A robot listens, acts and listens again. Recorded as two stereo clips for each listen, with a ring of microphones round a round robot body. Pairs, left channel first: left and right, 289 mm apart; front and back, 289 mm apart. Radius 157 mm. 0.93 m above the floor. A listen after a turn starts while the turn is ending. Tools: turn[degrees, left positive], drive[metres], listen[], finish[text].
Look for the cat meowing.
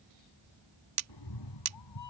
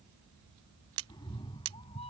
Thought: The cat meowing: 70° left.
Action: turn[70]
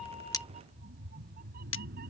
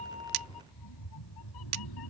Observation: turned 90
Thought: The cat meowing is now 25° right.
Action: turn[-25]
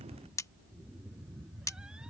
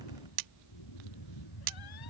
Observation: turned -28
Action: finish[Found it: a cat meowing, straight ahead.]